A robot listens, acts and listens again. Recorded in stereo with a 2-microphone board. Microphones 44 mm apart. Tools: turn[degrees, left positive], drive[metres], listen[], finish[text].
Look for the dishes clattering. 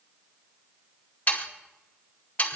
Action: listen[]
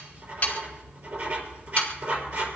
Action: listen[]
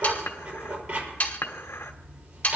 Thought: The dishes clattering: about 75° left or 105° left.
Action: turn[75]
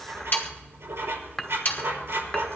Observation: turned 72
Thought: So it is at 15° left.
Action: turn[15]
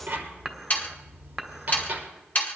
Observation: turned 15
Action: listen[]
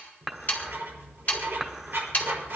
Action: finish[Facing the dishes clattering, 1 to 2 m away.]